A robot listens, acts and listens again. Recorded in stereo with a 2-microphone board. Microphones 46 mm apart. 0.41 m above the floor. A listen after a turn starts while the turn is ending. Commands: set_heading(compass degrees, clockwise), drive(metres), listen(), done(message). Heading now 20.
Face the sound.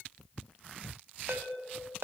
set_heading(75)
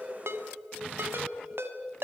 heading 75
set_heading(140)
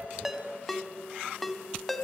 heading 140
done("Found it: a ringtone, straight ahead.")